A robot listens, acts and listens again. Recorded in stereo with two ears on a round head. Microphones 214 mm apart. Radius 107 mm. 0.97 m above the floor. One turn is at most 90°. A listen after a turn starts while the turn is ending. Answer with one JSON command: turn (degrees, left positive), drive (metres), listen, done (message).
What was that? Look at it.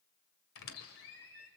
{"turn": 65}
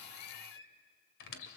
{"turn": 50}
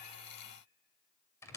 {"turn": 10}
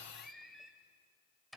{"done": "Found it: a squeak, straight ahead, 2 to 4 m away."}